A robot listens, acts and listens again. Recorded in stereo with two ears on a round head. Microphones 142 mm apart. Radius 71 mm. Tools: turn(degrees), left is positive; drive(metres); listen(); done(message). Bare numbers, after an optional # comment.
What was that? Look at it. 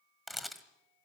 turn(30)
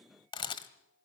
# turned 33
# So it is at 145° left.
turn(145)
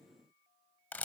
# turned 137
# The camera shutter is now 10° left.
turn(10)
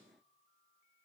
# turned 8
listen()
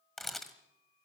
done("Found it: a camera shutter, straight ahead.")